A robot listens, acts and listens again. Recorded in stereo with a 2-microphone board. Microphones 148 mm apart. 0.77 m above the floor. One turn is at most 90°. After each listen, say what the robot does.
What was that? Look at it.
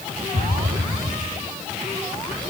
Turn 90° right.
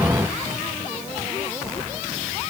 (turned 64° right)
Turn 25° right.
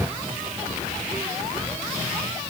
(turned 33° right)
I heard an explosion from this way, but can't make it out now.